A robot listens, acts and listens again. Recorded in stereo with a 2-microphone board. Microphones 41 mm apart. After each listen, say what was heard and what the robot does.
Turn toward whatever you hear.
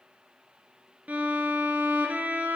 The violin: about 35° right or 145° right. Turn 35° right.
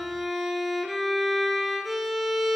Facing the violin.